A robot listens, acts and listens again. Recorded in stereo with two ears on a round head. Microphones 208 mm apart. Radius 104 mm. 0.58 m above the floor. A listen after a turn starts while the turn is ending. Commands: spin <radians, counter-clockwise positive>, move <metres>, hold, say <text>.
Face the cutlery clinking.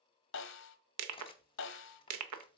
spin 0.35
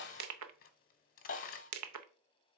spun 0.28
spin 2.44
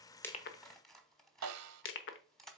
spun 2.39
say Facing the cutlery clinking, under 1 m away.